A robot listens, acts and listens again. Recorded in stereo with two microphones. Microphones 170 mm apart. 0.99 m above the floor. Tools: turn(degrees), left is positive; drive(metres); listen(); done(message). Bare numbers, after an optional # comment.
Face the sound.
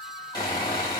# The sawing: about 25° left or 155° left.
turn(25)
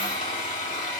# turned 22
# So it is at 135° left.
turn(135)
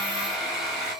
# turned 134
done("Facing the sawing, 2 to 4 m away.")